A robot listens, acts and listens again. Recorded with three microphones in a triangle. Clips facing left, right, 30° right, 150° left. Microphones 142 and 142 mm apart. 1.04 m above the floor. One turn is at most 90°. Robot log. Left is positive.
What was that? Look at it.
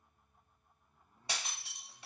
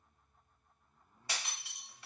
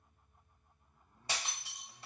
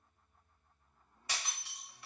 note: The breaking glass: 25° left.
cmd yaw +25
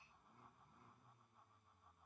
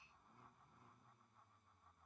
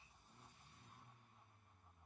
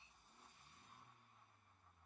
end: I heard breaking glass from this way, but can't make it out now.